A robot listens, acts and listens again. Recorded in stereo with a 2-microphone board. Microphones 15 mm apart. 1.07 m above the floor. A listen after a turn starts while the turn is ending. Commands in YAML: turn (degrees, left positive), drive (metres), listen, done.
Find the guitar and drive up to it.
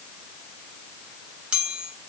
listen: true
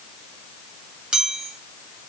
listen: true
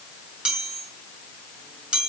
done: "I can't make out a guitar, only a chime."